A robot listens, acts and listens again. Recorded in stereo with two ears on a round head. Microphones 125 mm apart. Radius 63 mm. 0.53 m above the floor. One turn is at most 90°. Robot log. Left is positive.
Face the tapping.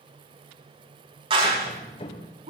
note: The tapping: about 35° left or 145° left.
cmd yaw +35
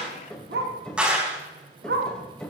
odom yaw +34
end: Facing the tapping.